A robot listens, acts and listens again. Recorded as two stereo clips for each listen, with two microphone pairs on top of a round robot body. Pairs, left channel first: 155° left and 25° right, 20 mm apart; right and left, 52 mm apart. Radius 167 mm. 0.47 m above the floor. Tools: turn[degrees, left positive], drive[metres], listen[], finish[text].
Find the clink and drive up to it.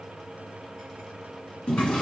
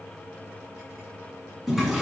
Action: listen[]
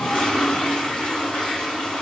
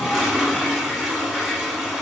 Action: listen[]
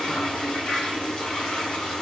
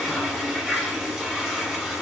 Action: finish[I can't make out a clink to turn to.]